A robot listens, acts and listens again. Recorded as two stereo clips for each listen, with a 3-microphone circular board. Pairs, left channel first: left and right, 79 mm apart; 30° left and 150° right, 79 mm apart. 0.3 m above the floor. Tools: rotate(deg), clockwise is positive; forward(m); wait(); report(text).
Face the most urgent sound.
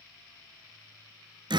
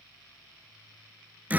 wait()
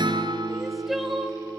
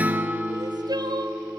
rotate(-180)
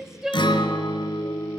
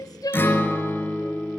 report("Found it: crying, straight ahead.")